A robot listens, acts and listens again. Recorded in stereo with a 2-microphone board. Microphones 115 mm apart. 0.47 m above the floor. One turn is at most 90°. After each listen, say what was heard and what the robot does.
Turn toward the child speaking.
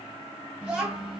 Turn 30° right.
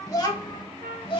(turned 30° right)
So it is at 45° left. Turn 45° left.
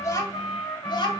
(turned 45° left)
The child speaking is now 40° left. Turn 40° left.
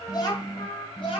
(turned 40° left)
The child speaking is now 50° left. Turn 50° left.
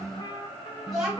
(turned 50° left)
Found it: a child speaking, straight ahead, 1 to 2 m away.